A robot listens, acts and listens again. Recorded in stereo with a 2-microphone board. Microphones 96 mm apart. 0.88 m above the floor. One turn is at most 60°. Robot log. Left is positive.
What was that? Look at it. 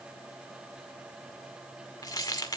note: The keys jangling: about 40° left or 140° left.
cmd yaw +40
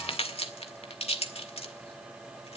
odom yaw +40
note: So it is at 100° left.
cmd yaw +60
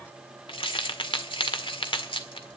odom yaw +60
note: The keys jangling is now 60° left.
cmd yaw +60
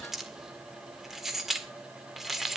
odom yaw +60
end: Facing the keys jangling.